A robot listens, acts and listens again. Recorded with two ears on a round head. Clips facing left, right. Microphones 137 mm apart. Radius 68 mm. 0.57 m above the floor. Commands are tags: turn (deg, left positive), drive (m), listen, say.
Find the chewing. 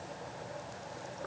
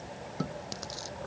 <turn deg="-90"/>
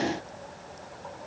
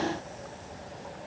<listen/>
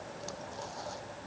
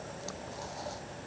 <listen/>
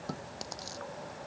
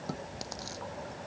<say>Found it: chewing, straight ahead.</say>